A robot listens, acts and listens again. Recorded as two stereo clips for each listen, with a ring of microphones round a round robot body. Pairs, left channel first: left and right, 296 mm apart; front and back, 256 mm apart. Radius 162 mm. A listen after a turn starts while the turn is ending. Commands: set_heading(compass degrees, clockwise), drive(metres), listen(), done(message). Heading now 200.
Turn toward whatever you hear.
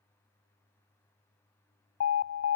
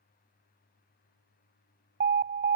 set_heading(70)
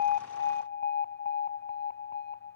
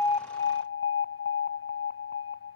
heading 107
set_heading(72)
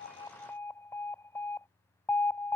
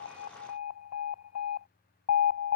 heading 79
set_heading(69)
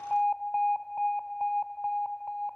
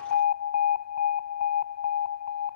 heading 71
done("Facing the alarm.")